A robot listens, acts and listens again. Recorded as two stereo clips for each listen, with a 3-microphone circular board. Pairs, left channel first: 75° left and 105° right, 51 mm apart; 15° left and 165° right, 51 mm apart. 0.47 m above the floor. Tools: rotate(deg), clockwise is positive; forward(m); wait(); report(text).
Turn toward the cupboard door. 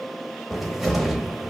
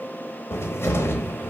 rotate(20)
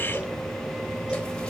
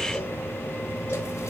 report("Found it: a cupboard door, straight ahead, under 1 m away.")